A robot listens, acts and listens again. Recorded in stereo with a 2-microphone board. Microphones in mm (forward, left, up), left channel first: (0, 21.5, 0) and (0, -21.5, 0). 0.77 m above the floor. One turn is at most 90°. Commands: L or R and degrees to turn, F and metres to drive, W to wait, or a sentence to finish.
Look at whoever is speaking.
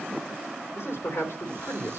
L70
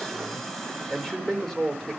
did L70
L15
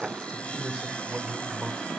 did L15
Found it: a man speaking, straight ahead.